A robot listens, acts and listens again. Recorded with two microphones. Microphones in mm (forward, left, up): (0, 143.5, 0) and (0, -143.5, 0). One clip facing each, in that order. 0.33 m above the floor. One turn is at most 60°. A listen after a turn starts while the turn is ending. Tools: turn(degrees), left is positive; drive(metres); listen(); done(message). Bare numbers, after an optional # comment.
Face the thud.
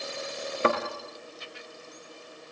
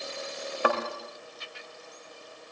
# The thud: about 25° left or 155° left.
turn(25)
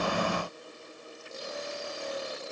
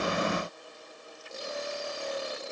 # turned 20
listen()
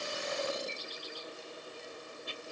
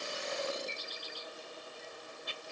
done("I heard a thud, but can't make it out now. It was about 5° left or 135° left.")